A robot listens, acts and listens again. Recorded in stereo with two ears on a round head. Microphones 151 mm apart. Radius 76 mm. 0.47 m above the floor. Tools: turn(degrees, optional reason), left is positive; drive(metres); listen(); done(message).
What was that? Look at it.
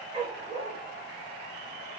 turn(degrees=-40, reason="The dog barking: about 40° right or 140° right.")
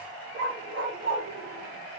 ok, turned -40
turn(degrees=-110, reason="So it is at 110° right.")
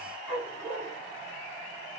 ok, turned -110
done("Found it: a dog barking, straight ahead, over 4 m away.")